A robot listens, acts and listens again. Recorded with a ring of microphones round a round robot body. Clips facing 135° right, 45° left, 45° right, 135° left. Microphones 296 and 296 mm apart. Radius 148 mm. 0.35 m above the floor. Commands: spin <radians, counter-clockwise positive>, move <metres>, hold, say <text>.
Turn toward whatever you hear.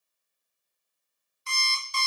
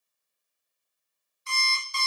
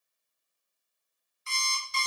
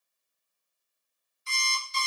spin -1.48
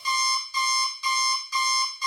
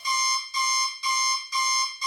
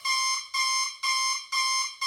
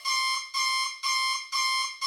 spin -0.17
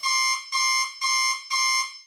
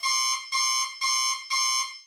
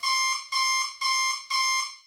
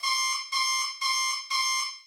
say Facing the alarm clock.